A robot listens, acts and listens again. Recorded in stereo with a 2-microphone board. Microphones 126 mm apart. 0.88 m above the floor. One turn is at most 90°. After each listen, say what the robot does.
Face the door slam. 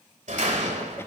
Turn 75° right.
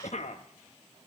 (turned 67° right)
Keep listening.
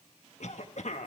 I heard a door slam, but can't make it out now. It was about 10° right or 40° right.